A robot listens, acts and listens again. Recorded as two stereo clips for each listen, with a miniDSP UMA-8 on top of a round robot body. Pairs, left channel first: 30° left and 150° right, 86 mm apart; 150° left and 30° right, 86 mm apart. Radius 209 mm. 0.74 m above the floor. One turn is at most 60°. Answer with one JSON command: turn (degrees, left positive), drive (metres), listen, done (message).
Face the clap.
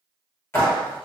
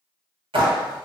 {"turn": -30}
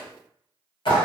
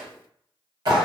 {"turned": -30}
{"turn": 10}
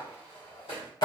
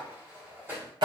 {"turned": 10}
{"done": "Facing the clap, 1 to 2 m away."}